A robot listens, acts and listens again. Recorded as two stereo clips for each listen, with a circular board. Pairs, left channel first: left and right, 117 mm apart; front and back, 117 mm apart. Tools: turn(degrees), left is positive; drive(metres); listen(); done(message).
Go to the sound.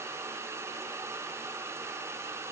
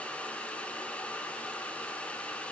listen()
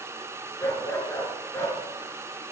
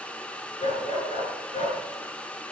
turn(degrees=25)
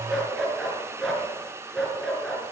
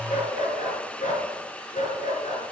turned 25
drive(metres=1.0)
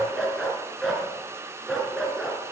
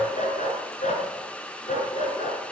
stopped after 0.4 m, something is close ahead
done("Something is in my way. I am facing the dog barking but have not reached it.")